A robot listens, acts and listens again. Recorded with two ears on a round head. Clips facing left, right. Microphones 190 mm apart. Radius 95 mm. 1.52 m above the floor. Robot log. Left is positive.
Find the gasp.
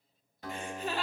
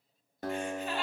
note: The gasp: about 65° left or 115° left.
cmd yaw +65
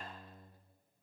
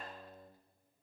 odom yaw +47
cmd idle
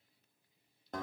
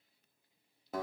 end: I heard a gasp, but can't make it out now. It was about 15° left or 70° left.